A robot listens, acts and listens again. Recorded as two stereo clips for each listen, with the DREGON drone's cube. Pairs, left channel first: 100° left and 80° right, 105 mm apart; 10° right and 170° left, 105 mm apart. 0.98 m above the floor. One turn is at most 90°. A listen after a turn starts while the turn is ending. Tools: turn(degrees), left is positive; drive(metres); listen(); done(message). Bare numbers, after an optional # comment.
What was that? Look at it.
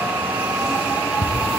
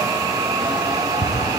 # The ticking: 40° left.
turn(40)
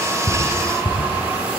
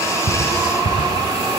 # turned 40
done("Found it: ticking, straight ahead.")